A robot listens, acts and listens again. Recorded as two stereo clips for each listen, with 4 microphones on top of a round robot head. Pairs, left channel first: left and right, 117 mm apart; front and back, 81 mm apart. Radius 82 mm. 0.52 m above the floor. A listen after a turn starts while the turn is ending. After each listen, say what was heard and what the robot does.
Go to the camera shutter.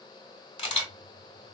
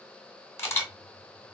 The camera shutter: 50° left. Turn 50° left.
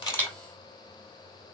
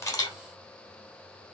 Keep listening.
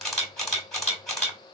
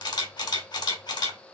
Drive 1.0 m forward.
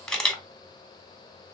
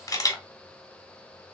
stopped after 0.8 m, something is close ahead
The camera shutter is now 10° left. Turn 10° left.
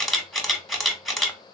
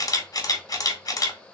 I am next to the camera shutter.